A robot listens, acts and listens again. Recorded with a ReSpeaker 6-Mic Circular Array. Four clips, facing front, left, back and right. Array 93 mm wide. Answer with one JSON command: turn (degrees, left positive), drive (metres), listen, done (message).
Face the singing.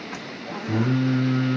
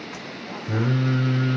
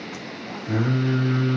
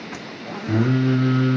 {"turn": -105}
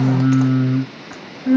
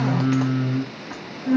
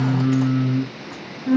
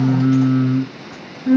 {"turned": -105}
{"turn": -20}
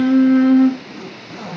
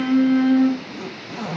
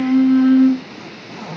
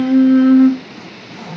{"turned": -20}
{"turn": -20}
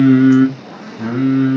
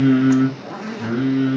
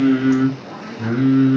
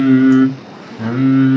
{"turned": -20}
{"turn": -60}
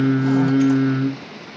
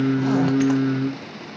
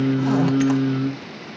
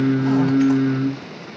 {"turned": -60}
{"done": "Facing the singing, 1 to 2 m away."}